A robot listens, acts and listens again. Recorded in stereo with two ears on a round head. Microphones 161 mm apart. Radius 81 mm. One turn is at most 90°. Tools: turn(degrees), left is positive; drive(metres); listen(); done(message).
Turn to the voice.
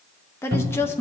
turn(degrees=30)
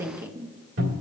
turn(degrees=-15)
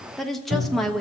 done("Facing the woman speaking, under 1 m away.")